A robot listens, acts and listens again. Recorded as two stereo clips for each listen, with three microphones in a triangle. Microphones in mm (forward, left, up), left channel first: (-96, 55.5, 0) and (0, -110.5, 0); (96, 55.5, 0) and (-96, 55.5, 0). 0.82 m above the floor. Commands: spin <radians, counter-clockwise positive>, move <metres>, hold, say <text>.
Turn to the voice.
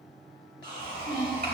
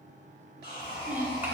spin -1.75
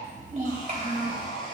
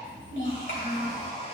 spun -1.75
spin -0.26
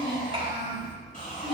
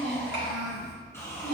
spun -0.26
say Found it: a child speaking, straight ahead.